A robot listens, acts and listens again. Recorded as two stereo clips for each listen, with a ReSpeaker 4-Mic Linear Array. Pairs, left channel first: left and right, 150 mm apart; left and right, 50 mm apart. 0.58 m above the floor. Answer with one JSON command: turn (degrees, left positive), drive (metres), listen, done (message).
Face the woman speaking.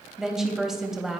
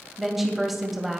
{"turn": -30}
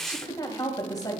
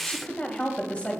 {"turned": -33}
{"turn": 30}
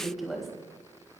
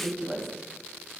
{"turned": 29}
{"done": "Facing the woman speaking, 2 to 4 m away."}